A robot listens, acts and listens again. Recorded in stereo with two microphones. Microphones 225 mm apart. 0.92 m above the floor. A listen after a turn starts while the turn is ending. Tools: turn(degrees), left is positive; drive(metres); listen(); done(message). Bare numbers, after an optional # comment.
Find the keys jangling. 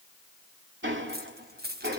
# The keys jangling: about 50° right or 130° right.
turn(-50)
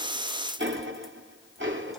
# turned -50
listen()
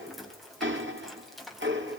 done("Facing the keys jangling.")